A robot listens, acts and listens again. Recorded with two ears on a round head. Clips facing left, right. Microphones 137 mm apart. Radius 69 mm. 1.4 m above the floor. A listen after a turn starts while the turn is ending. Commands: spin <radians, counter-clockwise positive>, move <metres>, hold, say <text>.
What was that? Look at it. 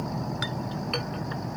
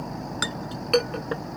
spin -1.05
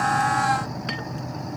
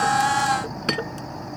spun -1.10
spin -0.96
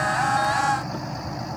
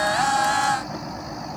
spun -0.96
hold
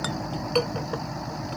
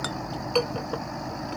say Found it: a clink, straight ahead.